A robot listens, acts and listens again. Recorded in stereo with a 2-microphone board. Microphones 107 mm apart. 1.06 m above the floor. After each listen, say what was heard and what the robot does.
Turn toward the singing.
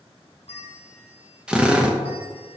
Keep listening.
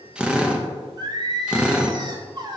The singing: about 40° right or 140° right. Turn 40° right.
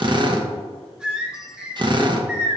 So it is at 10° right. Turn 10° right.
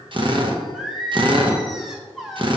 Facing the singing, under 1 m away.